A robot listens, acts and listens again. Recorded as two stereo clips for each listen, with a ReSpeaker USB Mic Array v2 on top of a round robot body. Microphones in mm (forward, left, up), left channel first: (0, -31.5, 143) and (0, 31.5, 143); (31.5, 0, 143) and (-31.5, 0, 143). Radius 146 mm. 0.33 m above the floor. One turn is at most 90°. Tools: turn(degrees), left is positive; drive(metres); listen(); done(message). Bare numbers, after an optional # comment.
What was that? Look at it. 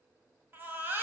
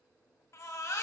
# The baby crying: 35° left.
turn(35)
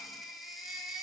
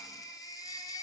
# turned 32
done("Found it: a baby crying, straight ahead, 1 to 2 m away.")